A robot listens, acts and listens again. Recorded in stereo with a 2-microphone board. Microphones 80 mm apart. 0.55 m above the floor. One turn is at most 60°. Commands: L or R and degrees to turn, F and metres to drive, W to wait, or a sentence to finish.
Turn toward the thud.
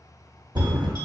R60
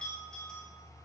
W
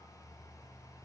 I heard a thud, but can't make it out now. It was about 10° right or 50° right.